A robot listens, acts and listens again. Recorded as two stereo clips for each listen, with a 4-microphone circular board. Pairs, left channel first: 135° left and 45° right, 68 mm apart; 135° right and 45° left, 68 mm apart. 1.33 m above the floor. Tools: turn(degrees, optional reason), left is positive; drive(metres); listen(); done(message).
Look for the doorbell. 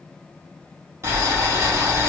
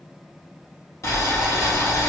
listen()
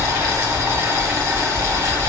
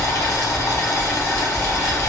listen()
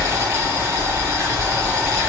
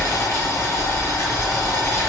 done("I can't make out a doorbell, only boiling.")